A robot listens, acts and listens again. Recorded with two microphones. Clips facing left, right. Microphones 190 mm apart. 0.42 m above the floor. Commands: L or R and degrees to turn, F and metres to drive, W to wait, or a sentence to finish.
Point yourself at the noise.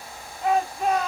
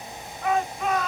L35
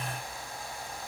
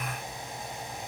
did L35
W
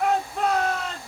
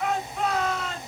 L100
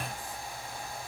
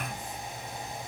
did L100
W
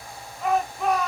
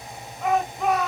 Facing the shout.